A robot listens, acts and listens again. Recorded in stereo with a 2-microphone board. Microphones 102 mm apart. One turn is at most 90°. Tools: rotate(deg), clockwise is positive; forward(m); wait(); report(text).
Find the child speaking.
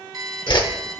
wait()
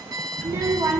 rotate(35)
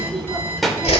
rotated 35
report("Facing the child speaking.")